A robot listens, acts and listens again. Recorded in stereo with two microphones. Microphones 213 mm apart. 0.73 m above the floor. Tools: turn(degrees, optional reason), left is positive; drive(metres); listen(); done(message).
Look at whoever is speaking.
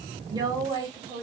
turn(degrees=-20, reason="The woman speaking: about 20° right or 160° right.")
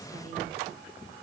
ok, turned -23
listen()
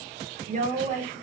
turn(degrees=-140, reason="So it is at 140° right.")
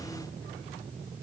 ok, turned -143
listen()
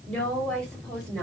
done("Facing the woman speaking.")